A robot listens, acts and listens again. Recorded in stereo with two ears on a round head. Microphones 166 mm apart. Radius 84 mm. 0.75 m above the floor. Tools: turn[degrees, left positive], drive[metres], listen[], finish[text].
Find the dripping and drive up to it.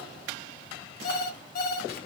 Action: listen[]
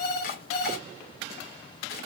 Action: listen[]
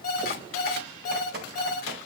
Thought: The dripping: about 55° right or 125° right.
Action: turn[-55]
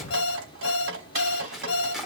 Thought: So it is at 70° right.
Action: turn[-70]
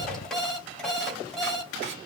Action: drive[1.0]
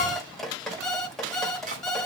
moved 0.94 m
Action: drive[1.0]
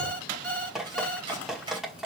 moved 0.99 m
Action: drive[1.0]
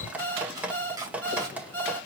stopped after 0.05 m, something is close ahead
Thought: The dripping is now 10° right.
Action: turn[-10]
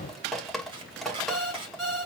Action: finish[I am next to the dripping.]